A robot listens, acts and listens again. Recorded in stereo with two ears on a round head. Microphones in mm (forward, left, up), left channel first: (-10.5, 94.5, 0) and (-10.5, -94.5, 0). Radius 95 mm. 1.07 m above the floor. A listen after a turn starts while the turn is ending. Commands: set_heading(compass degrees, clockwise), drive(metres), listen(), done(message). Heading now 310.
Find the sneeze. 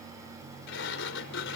listen()
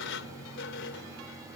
listen()
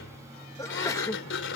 set_heading(280)
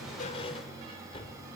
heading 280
listen()
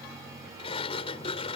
done("I heard a sneeze, but can't make it out now. It was about 15° right or 135° left.")